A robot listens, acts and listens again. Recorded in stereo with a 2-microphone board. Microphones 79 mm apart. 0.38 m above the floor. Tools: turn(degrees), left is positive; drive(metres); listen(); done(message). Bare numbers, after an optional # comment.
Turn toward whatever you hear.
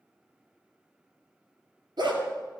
# The dog barking: about 65° right or 115° right.
turn(-65)
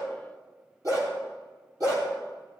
# So it is at 45° right.
turn(-45)
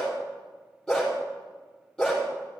# The dog barking is now 10° left.
turn(10)
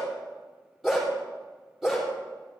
done("Found it: a dog barking, straight ahead, over 4 m away.")